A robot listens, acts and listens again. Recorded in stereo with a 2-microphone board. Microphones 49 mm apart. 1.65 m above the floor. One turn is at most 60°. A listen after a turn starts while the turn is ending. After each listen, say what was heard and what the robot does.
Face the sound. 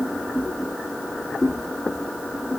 Keep listening.
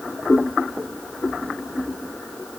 Keep listening.
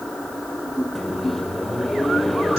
Turn 30° left.
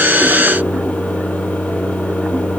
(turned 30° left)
So it is at 150° left. Turn 60° left.
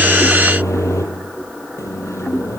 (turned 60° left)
The microwave is now 75° left. Turn 60° left.
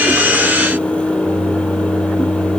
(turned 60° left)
The microwave is now 25° left. Turn 25° left.
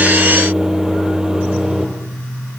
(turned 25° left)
The microwave is now 10° right. Turn 10° right.
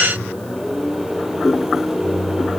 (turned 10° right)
Found it: a microwave, straight ahead.